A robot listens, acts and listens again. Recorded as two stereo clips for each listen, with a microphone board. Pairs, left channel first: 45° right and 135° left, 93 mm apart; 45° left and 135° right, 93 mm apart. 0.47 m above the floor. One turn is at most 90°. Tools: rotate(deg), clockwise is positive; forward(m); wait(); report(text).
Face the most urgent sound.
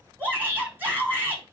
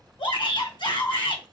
rotate(-65)
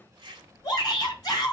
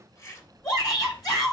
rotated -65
report("Found it: a shout, straight ahead, 2 to 4 m away.")